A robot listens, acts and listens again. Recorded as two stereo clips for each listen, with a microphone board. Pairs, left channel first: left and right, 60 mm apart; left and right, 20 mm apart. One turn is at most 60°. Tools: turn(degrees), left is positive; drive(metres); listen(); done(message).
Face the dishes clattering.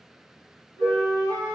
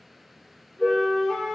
turn(degrees=30)
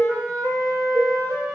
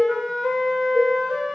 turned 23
turn(degrees=60)
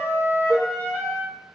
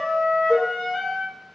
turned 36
turn(degrees=60)
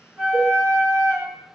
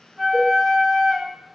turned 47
turn(degrees=60)
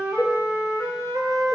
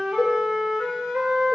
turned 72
done("Found it: dishes clattering, straight ahead, 1 to 2 m away.")